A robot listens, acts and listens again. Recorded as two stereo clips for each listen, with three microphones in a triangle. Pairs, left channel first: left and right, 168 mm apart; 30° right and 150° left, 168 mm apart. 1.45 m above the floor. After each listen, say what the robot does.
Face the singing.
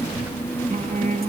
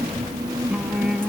Turn 120° right.
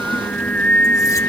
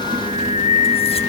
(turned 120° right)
Turn 10° left.
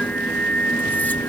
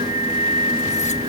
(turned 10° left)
Turn 10° left.
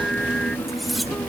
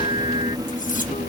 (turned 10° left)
Keep listening.
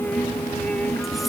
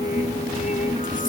Facing the singing.